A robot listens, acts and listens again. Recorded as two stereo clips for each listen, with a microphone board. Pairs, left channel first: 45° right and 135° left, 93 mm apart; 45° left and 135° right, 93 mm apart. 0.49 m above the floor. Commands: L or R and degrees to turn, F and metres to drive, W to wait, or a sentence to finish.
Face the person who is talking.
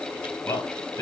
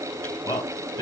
Found it: a man speaking, straight ahead.